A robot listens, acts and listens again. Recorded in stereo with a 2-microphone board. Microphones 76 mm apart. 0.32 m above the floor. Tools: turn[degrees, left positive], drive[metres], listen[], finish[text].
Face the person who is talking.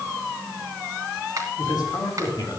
Thought: The man speaking: about 70° left or 110° left.
Action: turn[70]
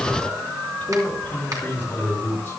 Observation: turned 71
Thought: So it is at 25° left.
Action: turn[25]
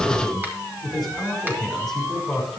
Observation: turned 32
Action: finish[Facing the man speaking, over 4 m away.]